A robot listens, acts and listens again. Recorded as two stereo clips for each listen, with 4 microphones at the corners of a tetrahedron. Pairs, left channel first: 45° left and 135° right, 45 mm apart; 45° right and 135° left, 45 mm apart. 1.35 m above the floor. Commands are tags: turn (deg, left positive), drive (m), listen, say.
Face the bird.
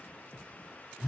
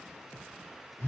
<listen/>
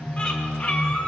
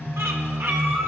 <turn deg="115"/>
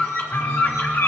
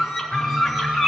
<turn deg="40"/>
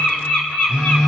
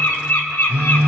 <turn deg="-15"/>
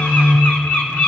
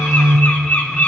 <say>Facing the bird.</say>